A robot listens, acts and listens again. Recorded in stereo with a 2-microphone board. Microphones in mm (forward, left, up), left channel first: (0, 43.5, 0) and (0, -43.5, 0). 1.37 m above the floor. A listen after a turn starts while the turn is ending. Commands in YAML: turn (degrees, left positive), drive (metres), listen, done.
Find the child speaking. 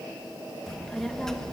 turn: 30
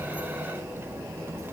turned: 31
turn: -30
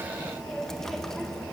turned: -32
done: "Found it: a child speaking, straight ahead."